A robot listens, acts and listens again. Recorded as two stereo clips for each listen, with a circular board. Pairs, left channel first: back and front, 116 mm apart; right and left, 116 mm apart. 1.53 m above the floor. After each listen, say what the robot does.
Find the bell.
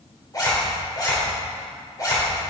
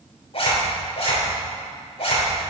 Keep listening.
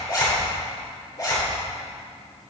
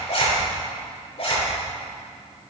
Keep listening.
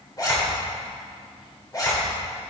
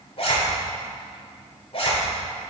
I can't make out a bell, only a zipper.